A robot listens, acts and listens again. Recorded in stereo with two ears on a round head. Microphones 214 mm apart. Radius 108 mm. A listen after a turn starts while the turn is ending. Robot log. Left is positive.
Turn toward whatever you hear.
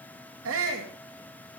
note: The shout: about 65° right or 115° right.
cmd yaw -65
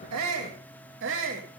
note: So it is at 55° right.
cmd yaw -55
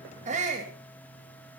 note: The shout is now 30° right.
cmd yaw -30
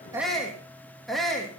end: Found it: a shout, straight ahead.